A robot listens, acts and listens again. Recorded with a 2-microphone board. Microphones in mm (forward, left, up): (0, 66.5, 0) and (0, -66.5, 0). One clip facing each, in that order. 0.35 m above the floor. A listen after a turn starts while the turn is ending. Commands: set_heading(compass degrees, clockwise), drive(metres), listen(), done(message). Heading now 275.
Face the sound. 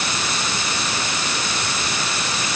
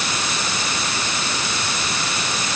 listen()
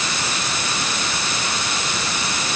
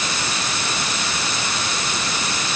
listen()
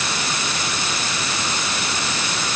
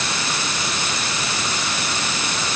done("I can't make out anything to turn to.")